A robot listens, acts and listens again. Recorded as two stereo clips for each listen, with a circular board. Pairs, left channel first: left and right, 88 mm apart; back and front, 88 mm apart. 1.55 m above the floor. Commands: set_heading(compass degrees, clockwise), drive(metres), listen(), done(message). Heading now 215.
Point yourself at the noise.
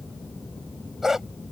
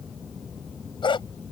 set_heading(30)
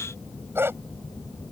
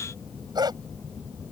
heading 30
set_heading(60)
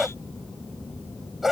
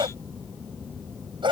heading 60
done("Found it: a dog barking, straight ahead.")